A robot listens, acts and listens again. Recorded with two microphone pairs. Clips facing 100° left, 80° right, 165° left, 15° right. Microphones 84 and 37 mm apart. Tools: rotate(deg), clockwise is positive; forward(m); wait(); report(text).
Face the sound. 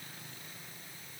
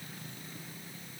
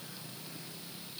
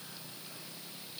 wait()
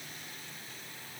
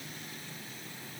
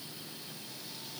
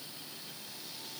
wait()
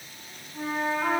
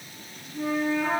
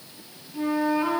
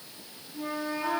rotate(-135)
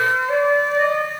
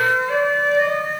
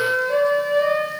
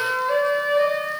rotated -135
rotate(-35)
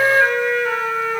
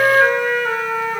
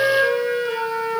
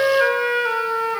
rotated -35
report("Facing the flute.")